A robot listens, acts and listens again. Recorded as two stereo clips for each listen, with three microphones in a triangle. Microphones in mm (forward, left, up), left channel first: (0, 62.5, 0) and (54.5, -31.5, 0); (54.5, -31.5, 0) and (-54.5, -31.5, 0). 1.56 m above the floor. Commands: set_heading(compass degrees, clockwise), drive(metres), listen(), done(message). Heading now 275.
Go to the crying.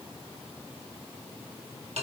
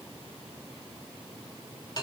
listen()
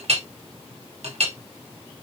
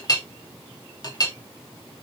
listen()
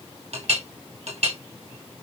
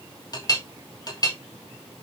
done("I can't make out crying to turn to.")